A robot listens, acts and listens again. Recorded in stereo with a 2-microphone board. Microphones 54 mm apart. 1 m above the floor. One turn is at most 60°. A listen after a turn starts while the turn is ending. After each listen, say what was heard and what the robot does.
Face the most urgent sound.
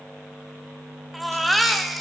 Turn 30° left.
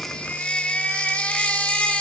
So it is at 155° left. Turn 60° left.
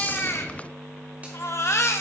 The baby crying is now 90° left. Turn 60° left.
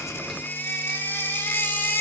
The baby crying is now 55° left. Turn 55° left.
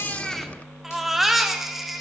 Found it: a baby crying, straight ahead.